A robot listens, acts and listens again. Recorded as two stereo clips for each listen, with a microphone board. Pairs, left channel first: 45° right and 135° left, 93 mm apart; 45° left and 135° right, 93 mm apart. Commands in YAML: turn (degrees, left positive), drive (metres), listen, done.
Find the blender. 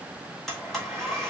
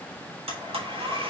turn: -130
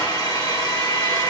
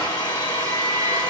done: "Found it: a blender, straight ahead, 1 to 2 m away."